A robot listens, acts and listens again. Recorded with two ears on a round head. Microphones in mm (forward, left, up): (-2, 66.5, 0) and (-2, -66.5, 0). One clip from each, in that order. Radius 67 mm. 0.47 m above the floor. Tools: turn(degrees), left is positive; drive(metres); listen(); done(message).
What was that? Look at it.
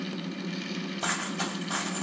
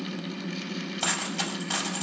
turn(degrees=-70)
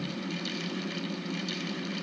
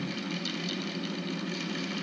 listen()
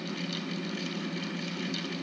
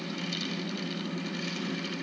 done("I heard a dropped coin, but can't make it out now. It was about straight ahead or 40° right.")